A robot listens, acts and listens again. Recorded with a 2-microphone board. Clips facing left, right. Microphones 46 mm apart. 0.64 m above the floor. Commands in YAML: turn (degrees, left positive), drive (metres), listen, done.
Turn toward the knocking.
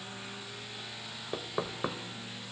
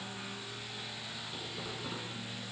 turn: 75
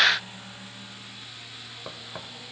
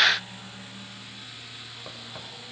turn: 20
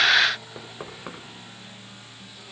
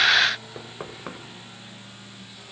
done: "Found it: knocking, straight ahead, 2 to 4 m away."